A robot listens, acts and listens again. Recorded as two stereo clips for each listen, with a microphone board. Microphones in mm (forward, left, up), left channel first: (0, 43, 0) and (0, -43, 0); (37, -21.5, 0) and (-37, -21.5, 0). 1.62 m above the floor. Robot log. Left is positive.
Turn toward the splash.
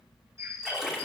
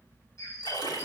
end: Facing the splash, 2 to 4 m away.